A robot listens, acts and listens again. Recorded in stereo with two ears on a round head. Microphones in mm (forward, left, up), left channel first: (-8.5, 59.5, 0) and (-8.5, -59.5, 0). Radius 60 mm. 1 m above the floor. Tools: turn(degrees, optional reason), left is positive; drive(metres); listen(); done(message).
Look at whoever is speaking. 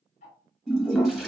listen()
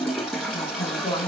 turn(degrees=35, reason="The woman speaking: about 35° left or 145° left.")
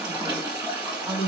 done("Facing the woman speaking.")